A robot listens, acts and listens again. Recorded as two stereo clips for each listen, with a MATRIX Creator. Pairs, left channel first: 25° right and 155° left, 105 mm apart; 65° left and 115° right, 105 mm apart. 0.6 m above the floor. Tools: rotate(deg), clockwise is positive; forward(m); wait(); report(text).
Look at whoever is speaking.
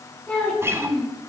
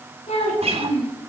rotate(-60)
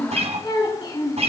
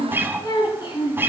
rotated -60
rotate(-20)
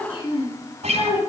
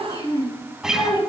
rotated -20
rotate(-10)
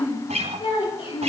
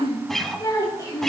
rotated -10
report("Facing the child speaking, over 4 m away.")